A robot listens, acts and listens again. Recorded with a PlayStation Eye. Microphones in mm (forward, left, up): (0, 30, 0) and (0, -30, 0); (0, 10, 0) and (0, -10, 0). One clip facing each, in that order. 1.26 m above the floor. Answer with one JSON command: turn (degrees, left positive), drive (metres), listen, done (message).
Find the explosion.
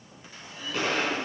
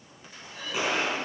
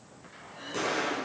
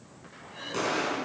{"turn": -30}
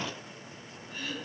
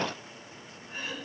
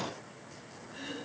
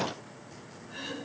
{"listen": true}
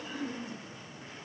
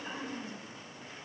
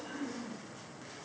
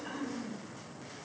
{"done": "I heard an explosion, but can't make it out now. It was about 20° left or 140° right."}